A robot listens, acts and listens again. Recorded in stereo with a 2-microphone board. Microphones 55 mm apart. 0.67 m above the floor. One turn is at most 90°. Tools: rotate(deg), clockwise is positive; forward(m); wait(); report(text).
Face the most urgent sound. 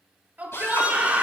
rotate(30)
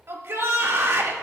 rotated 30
rotate(90)
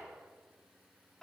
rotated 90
rotate(20)
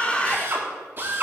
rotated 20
rotate(-30)
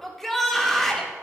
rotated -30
rotate(-10)
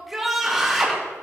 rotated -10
report("Found it: a shout, straight ahead, 2 to 4 m away.")